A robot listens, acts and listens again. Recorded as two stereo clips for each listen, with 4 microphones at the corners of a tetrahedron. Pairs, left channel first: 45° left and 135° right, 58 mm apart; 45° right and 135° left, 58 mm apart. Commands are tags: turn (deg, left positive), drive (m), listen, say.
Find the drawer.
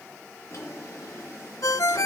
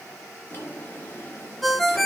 <say>Facing the drawer.</say>